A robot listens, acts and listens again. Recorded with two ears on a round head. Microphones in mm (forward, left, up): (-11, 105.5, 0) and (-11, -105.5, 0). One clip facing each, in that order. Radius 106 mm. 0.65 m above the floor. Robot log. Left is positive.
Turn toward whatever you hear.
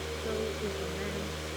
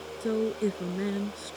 note: The woman speaking: about 55° right or 125° right.
cmd yaw -55
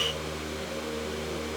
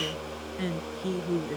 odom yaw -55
note: So it is at 70° right.
cmd yaw -70
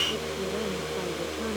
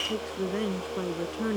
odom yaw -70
note: The woman speaking is now 25° right.
cmd yaw -25
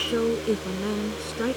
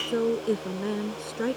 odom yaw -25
end: Found it: a woman speaking, straight ahead.